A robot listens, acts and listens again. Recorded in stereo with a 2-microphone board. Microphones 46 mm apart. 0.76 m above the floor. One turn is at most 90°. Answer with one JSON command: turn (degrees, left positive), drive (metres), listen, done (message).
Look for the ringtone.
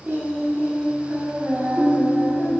{"turn": 30}
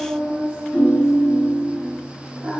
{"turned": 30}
{"turn": 90}
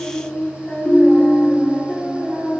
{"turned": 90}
{"turn": 80}
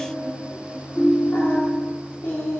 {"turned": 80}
{"turn": 20}
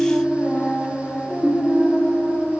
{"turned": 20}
{"done": "Facing the ringtone."}